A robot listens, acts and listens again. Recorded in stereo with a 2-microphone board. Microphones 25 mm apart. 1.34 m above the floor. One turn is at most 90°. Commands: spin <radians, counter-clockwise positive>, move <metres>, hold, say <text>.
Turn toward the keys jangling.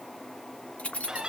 spin 1.13
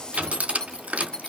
spin 0.52
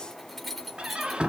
say Facing the keys jangling, 2 to 4 m away.